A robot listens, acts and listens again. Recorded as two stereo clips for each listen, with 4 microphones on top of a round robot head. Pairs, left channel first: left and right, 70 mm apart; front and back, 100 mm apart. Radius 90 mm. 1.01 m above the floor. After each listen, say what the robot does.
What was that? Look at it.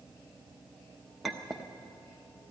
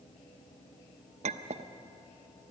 Turn 180° left.
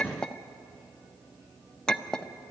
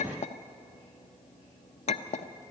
Turn 10° left.
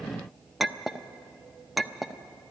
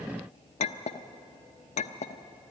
Facing the clink.